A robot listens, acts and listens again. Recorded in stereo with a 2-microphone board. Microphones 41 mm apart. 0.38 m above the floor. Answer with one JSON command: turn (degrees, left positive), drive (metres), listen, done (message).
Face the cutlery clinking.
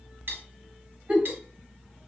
{"turn": -70}
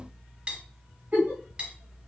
{"turn": -35}
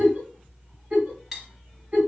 {"turn": -10}
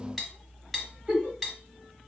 {"done": "Found it: cutlery clinking, straight ahead."}